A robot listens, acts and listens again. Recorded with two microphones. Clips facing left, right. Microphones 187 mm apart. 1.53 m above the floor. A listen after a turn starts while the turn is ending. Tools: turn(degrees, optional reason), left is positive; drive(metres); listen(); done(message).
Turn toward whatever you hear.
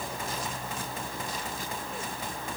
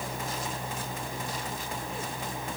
listen()
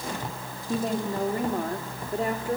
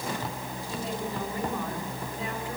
turn(degrees=45, reason="The woman speaking: about 45° left or 135° left.")
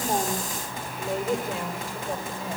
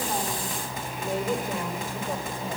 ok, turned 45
done("Facing the woman speaking.")